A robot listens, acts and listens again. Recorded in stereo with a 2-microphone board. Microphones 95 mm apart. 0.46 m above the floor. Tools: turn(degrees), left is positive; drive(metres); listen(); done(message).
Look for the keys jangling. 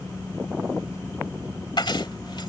turn(degrees=60)
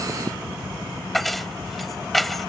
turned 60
done("Found it: keys jangling, straight ahead.")